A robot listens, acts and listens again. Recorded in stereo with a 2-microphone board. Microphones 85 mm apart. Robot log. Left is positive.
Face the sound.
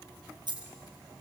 note: The dropped coin: about 60° right or 120° right.
cmd yaw -60
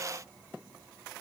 cmd idle
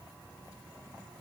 end: I heard a dropped coin, but can't make it out now. It was about straight ahead or 60° right.